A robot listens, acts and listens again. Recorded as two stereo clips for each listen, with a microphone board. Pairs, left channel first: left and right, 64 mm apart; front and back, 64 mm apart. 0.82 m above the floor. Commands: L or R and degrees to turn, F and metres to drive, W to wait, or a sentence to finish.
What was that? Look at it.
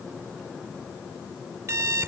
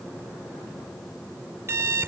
R135
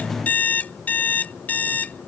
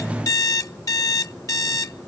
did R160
L25
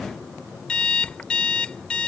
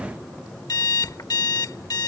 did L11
L15
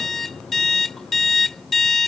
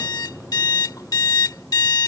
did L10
Found it: an alarm clock, straight ahead.